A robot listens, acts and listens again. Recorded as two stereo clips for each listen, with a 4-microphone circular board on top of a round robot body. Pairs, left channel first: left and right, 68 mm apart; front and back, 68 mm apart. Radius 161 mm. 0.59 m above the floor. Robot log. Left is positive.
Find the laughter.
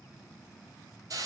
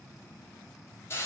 cmd idle
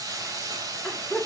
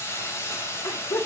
end: Found it: laughter, straight ahead, 2 to 4 m away.